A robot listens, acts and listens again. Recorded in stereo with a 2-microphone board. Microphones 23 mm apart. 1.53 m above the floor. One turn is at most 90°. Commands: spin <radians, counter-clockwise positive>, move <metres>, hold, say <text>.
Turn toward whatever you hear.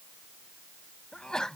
spin 0.61
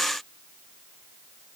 hold
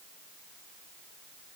say I heard a sneeze, but can't make it out now. It was about straight ahead or 110° left.